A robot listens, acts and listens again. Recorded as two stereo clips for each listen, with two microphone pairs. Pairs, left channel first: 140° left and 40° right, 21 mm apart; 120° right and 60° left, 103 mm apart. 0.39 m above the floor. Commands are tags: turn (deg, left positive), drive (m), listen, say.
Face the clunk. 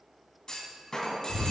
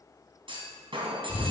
<turn deg="90"/>
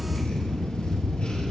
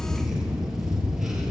<say>I heard a clunk from this way, but can't make it out now.</say>